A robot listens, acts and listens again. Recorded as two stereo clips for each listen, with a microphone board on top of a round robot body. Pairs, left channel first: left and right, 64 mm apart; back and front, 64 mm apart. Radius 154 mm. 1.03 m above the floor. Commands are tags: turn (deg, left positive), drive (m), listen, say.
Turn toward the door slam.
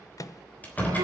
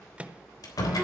<turn deg="155"/>
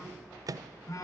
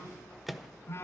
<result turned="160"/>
<say>I heard a door slam from this way, but can't make it out now.</say>